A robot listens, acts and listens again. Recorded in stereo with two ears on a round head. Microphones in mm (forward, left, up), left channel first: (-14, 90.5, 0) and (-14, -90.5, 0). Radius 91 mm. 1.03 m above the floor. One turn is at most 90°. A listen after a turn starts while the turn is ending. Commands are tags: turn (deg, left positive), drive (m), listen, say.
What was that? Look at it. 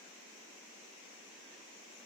<listen/>
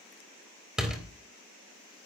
<turn deg="-30"/>
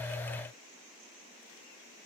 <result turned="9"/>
<listen/>
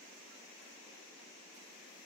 <say>I heard a door slam, but can't make it out now. It was about 10° right or 175° left.</say>